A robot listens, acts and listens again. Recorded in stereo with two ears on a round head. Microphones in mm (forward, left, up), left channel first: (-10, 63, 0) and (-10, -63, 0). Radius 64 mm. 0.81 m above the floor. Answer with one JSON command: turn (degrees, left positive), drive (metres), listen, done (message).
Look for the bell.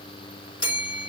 {"turn": 40}
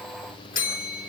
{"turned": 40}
{"turn": 95}
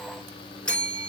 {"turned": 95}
{"done": "Facing the bell."}